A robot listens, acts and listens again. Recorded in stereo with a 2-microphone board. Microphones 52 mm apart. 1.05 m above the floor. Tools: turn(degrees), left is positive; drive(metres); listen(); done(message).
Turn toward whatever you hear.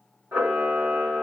turn(degrees=-90)
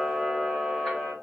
turn(degrees=15)
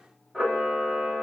done("Found it: a camera shutter, straight ahead, 1 to 2 m away.")